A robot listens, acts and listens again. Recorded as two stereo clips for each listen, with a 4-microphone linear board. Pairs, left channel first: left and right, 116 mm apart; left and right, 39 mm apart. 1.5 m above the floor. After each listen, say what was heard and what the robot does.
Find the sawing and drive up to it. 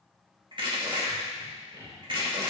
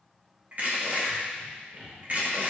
The sawing: about 40° right or 140° right. Turn 40° right.
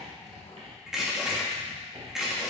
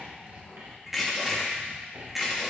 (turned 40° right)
So it is at 95° right. Turn 95° right.
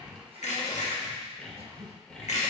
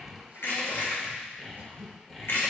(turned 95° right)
The sawing is now 10° left. Turn 10° left.
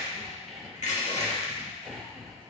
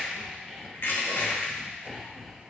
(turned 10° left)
Drive 1.0 m forward.
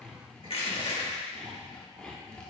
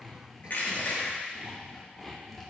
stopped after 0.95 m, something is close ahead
The sawing is now 10° left. Turn 10° left.
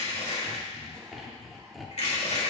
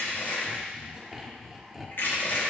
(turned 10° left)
Arrived at the sawing, straight ahead.